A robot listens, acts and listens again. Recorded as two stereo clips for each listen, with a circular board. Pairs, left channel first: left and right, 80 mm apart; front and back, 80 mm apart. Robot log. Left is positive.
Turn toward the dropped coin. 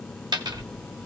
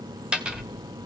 note: The dropped coin: 100° right.
cmd yaw -100
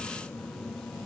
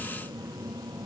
end: Facing where the dropped coin came from. I can't hear it now.